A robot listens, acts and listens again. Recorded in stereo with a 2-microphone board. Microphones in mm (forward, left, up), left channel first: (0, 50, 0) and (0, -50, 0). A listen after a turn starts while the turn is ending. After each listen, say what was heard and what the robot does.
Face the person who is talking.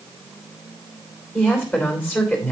Turn 30° left.
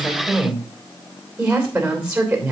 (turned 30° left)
So it is at 15° right. Turn 15° right.
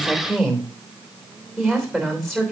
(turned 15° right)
Facing the woman speaking.